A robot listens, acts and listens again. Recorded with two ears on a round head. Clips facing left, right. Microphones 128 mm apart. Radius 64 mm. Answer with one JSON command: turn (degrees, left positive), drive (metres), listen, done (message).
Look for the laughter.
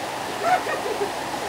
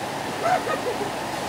{"turn": 20}
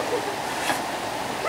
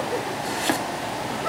{"turn": 15}
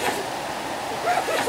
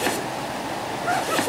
{"turn": 30}
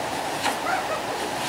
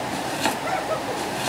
{"turn": -15}
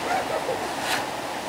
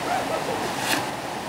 {"listen": true}
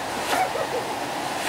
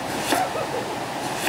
{"listen": true}
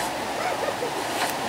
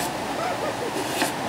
{"done": "I heard laughter from this way, but can't make it out now."}